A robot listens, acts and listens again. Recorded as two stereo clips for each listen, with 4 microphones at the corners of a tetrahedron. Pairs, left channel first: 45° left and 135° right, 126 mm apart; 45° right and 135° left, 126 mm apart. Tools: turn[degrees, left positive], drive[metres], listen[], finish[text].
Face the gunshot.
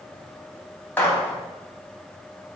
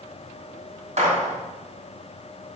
Thought: The gunshot: 120° left.
Action: turn[120]
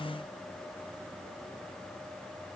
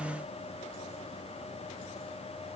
Action: finish[I heard a gunshot from this way, but can't make it out now.]